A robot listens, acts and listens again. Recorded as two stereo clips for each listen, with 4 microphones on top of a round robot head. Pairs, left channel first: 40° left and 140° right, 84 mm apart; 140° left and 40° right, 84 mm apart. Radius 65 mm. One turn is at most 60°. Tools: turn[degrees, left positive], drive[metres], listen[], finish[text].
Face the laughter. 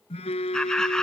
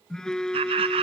Thought: The laughter: 45° right.
Action: turn[-45]
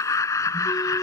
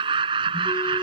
Thought: The laughter is now 15° right.
Action: turn[-15]
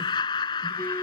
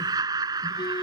Action: finish[Facing the laughter.]